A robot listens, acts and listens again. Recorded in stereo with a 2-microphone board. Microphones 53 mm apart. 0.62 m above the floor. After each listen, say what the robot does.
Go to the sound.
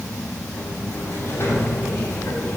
Turn 55° left.
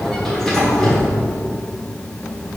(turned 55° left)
Turn 10° left.
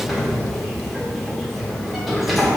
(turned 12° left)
Drive 1.0 m forward.
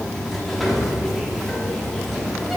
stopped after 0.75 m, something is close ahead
I am next to the sliding door.